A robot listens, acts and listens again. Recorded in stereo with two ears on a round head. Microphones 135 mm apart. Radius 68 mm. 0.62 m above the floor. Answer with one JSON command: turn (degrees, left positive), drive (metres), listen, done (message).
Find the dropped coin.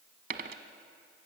{"turn": -65}
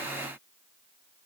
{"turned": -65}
{"listen": true}
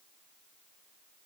{"done": "I heard a dropped coin, but can't make it out now. It was about straight ahead or 50° right."}